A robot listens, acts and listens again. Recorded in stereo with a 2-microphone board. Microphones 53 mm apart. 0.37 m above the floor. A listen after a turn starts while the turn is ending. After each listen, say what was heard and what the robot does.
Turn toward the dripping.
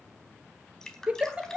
Turn 30° left.
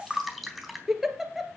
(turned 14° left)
Facing the dripping, 2 to 4 m away.